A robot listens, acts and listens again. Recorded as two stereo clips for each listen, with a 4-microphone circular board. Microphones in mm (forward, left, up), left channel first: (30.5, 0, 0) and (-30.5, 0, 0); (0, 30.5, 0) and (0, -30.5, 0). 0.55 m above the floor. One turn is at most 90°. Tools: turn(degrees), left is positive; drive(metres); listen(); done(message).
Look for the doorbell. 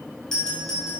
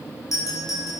turn(degrees=80)
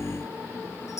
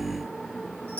listen()
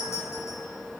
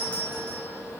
turn(degrees=25)
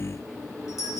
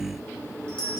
turn(degrees=15)
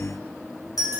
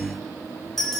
done("Facing the doorbell, over 4 m away.")